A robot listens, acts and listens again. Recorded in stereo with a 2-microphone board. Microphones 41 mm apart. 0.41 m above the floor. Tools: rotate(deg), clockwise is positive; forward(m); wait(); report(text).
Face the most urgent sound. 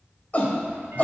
rotate(-40)
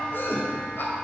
rotate(-90)
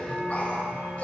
rotate(-40)
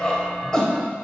rotate(-20)
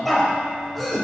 report("Facing the shout, 1 to 2 m away.")